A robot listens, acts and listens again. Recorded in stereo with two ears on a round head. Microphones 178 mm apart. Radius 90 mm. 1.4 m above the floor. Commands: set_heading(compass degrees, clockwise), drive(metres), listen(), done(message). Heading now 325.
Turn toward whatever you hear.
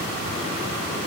listen()
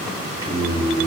set_heading(345)
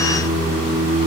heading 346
set_heading(21)
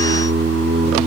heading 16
set_heading(131)
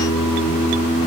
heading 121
set_heading(136)
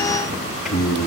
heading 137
done("Facing the singing, 2 to 4 m away.")